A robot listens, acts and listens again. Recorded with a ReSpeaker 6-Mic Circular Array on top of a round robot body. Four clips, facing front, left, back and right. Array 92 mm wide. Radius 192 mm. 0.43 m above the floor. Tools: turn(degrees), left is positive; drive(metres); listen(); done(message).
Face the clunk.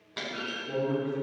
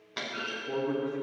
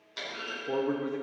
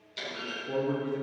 turn(degrees=70)
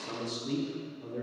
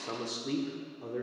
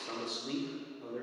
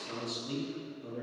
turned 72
done("I heard a clunk from this way, but can't make it out now.")